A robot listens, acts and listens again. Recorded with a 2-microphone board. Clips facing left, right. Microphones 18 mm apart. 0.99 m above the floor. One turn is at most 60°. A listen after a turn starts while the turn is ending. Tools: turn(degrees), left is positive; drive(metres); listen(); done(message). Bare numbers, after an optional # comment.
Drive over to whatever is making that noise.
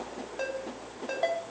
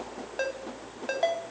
# The ringtone: about 40° right or 140° right.
turn(-40)
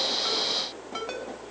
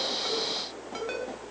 drive(1.0)
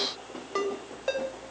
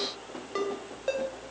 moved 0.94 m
drive(1.0)
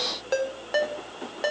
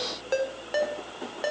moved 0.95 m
drive(1.0)
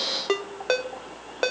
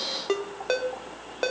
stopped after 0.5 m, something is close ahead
# The ringtone is now 15° left.
turn(15)
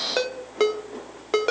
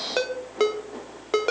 done("I am next to the ringtone.")